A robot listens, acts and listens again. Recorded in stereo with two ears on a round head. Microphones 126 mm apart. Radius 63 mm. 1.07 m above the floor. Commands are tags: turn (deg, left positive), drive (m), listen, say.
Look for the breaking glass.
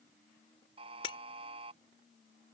<turn deg="40"/>
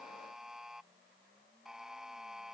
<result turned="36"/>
<listen/>
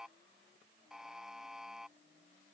<say>I heard breaking glass, but can't make it out now. It was about 5° left or 105° left.</say>